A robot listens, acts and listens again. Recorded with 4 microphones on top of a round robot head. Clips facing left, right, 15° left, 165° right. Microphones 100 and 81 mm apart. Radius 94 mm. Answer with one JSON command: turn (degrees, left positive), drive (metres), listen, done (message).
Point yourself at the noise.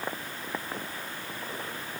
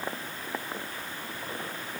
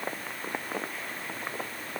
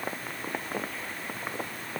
{"listen": true}
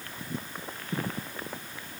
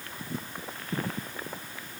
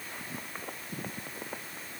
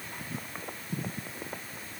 {"listen": true}
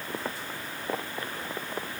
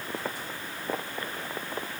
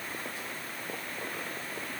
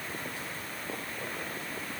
{"done": "I can't make out anything."}